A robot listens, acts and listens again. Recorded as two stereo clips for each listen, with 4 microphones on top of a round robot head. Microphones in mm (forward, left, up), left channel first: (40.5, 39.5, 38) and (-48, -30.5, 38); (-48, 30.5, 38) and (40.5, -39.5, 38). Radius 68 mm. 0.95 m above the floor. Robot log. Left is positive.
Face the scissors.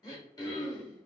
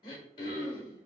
cmd idle
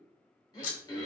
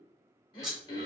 note: The scissors: 45° left.
cmd yaw +45
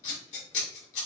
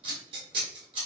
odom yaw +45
note: The scissors is now 10° left.
cmd yaw +10
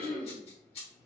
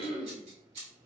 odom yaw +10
end: Found it: scissors, straight ahead.